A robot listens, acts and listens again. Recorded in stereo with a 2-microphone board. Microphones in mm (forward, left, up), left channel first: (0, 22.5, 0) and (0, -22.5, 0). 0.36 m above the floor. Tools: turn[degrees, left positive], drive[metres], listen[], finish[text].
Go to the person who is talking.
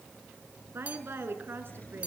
Thought: The woman speaking: about 65° right or 115° right.
Action: turn[-65]
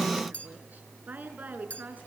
Thought: So it is at 45° right.
Action: turn[-45]
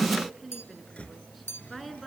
Action: drive[1.0]
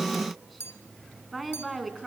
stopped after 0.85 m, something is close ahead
Action: finish[Something is in my way. I am facing the woman speaking but have not reached it.]